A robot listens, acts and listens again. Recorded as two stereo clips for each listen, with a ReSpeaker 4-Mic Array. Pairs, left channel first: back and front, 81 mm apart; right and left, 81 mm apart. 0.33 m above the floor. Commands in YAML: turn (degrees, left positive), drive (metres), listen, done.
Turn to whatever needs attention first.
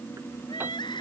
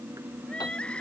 turn: -170
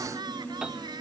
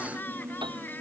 turn: -25
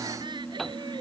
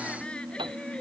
listen: true
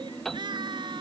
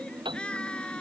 turn: -15
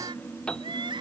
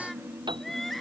done: "Facing the crying."